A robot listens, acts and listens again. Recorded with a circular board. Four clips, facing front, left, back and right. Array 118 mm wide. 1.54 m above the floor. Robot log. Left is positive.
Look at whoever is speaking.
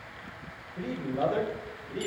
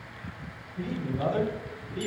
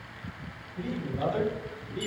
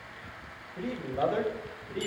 note: The man speaking: 45° right.
cmd yaw -45
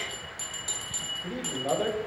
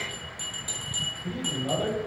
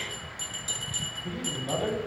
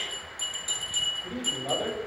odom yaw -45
end: Facing the man speaking, over 4 m away.